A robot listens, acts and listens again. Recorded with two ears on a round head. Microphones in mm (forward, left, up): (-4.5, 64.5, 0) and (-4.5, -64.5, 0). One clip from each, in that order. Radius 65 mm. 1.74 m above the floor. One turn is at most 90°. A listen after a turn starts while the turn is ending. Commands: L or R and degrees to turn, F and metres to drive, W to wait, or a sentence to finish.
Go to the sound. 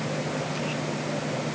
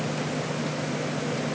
W
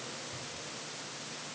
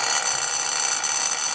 W
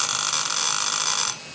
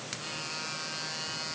I can't make out anything to turn to.